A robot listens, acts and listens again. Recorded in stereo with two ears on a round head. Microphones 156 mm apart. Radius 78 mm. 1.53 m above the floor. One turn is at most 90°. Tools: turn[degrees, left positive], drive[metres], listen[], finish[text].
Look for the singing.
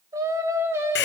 Action: turn[-30]
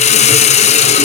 Action: listen[]
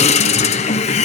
Action: listen[]
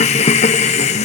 Action: finish[I heard singing, but can't make it out now. It was about 15° left or 135° right.]